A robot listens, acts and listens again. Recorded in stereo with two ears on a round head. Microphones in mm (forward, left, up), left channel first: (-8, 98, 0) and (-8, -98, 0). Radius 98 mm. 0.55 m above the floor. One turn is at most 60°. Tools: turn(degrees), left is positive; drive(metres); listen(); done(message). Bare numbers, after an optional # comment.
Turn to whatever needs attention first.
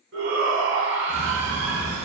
# The shout: about 55° right or 125° right.
turn(-55)
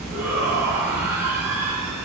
# So it is at 10° right.
turn(-10)
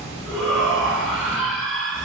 done("Found it: a shout, straight ahead.")